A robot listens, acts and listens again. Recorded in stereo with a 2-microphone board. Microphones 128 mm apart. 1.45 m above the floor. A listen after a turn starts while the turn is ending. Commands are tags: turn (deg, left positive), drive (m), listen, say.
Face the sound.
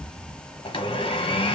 <turn deg="45"/>
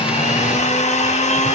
<turn deg="80"/>
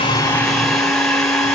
<say>Found it: a blender, straight ahead, under 1 m away.</say>